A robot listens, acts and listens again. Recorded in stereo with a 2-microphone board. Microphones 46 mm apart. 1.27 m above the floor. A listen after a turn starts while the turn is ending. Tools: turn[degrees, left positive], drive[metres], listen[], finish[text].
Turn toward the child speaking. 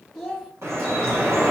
Action: turn[-30]
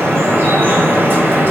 Action: listen[]
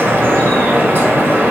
Action: listen[]
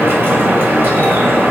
Action: finish[I heard a child speaking, but can't make it out now. It was about 25° left or 145° right.]